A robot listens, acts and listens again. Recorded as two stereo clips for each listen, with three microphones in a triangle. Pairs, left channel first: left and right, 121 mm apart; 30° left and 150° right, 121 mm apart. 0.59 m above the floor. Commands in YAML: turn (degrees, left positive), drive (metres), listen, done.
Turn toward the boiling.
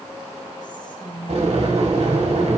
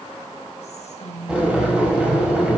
turn: -70
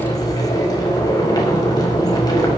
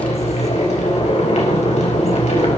turn: 35
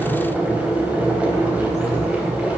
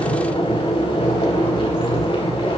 turn: -10
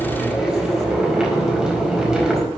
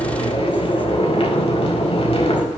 done: "Facing the boiling."